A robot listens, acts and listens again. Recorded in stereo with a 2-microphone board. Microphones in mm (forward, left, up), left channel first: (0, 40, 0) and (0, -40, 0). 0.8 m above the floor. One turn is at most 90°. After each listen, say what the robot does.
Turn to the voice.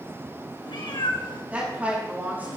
Turn 25° right.
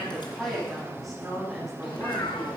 Found it: a woman speaking, straight ahead, over 4 m away.